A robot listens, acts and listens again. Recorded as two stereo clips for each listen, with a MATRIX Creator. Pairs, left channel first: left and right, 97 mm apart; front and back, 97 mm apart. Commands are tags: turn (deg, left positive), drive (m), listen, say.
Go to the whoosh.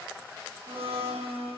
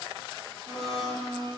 <listen/>
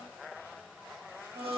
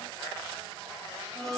<listen/>
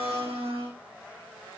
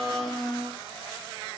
<say>I can't make out a whoosh, only a blender.</say>